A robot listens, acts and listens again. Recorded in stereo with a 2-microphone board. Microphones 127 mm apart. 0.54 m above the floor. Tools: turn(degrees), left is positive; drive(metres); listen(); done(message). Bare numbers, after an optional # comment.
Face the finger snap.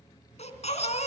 listen()
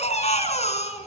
listen()
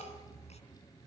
done("I can't make out a finger snap to turn to.")